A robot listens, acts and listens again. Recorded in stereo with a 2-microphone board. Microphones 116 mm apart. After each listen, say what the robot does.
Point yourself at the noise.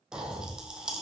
Turn 30° right.
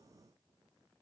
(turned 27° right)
Keep listening.
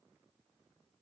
I heard a pop, but can't make it out now. It was about 20° left or 145° right.